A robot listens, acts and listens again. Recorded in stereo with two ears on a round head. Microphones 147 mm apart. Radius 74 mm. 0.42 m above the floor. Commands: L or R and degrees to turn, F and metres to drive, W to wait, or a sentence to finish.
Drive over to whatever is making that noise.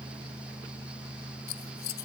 L65
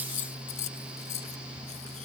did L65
L45
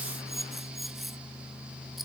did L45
F1.0
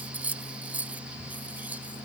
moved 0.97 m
R10
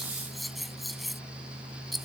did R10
F1.0
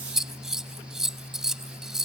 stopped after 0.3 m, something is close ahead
I am next to the scissors.